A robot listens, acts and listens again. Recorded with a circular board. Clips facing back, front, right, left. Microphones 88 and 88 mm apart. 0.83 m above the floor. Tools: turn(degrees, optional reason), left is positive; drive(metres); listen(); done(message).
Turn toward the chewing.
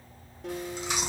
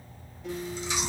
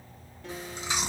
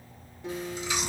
turn(degrees=-150, reason="The chewing: 150° right.")
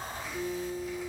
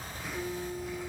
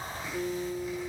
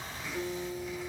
turn(degrees=-35, reason="The chewing is now 35° right.")
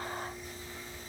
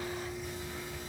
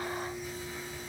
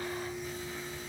listen()
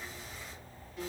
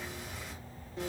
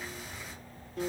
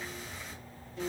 done("Facing the chewing, under 1 m away.")